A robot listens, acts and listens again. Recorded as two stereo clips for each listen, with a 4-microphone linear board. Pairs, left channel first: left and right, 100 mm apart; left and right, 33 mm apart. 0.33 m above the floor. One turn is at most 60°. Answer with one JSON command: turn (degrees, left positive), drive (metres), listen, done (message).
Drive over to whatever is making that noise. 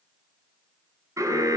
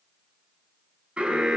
{"turn": -30}
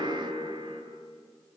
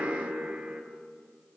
{"turn": -60}
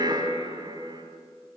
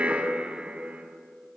{"turn": -50}
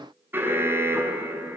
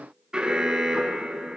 {"turn": -25}
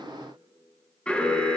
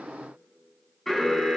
{"turn": 10}
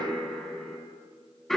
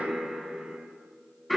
{"drive": 1.0}
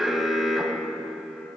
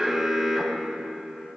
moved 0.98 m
{"drive": 1.0}
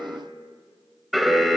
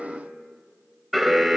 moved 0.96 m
{"drive": 1.0}
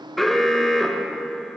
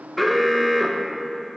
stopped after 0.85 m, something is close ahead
{"done": "Arrived at the alarm, straight ahead."}